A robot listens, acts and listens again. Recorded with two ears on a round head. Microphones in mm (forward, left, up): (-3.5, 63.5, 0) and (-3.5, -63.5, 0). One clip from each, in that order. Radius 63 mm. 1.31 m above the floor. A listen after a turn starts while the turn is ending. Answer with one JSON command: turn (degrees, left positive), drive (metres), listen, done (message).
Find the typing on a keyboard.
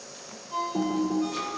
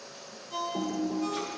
{"turn": 60}
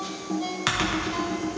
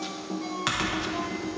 {"turn": 10}
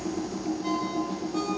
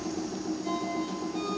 {"done": "Found it: typing on a keyboard, straight ahead."}